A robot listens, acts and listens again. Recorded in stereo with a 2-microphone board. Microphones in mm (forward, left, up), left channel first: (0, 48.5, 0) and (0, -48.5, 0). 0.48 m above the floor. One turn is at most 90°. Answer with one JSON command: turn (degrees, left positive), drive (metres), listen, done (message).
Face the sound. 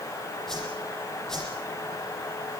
{"turn": 30}
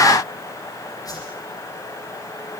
{"turn": 90}
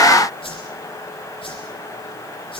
{"turn": 70}
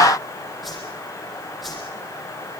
{"done": "Facing the whoosh."}